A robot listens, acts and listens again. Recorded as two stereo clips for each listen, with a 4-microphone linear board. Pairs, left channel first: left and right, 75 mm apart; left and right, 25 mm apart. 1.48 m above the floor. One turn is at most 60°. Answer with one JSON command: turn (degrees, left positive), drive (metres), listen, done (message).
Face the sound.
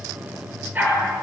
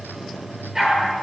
{"turn": -25}
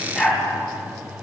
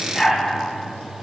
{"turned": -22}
{"done": "Found it: a dog barking, straight ahead, over 4 m away."}